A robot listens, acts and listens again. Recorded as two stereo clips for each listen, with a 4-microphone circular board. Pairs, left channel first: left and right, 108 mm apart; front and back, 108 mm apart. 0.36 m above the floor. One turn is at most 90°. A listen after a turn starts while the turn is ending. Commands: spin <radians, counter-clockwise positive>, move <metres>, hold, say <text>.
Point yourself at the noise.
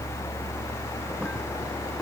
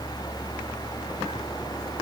hold
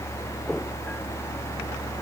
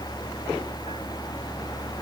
hold
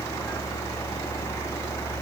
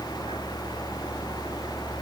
say I can't make out anything.